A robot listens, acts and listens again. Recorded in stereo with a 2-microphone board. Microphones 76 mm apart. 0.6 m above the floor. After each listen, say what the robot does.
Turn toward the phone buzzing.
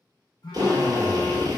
Turn 70° left.
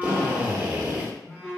Turn 10° left.
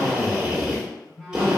Found it: a phone buzzing, straight ahead, under 1 m away.